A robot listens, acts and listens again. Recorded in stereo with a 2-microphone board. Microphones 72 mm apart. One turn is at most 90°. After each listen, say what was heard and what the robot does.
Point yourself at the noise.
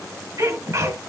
The sneeze: about 40° right or 140° right. Turn 40° right.
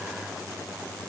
Keep listening.
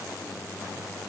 I heard a sneeze, but can't make it out now. It was about straight ahead or 100° right.